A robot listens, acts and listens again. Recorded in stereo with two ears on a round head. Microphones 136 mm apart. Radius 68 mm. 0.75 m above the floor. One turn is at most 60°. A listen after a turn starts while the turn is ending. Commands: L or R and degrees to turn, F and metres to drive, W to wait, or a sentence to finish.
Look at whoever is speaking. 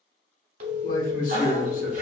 L55
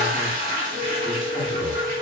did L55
W
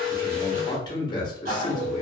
L35
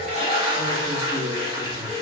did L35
W
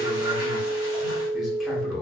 Facing the man speaking, 1 to 2 m away.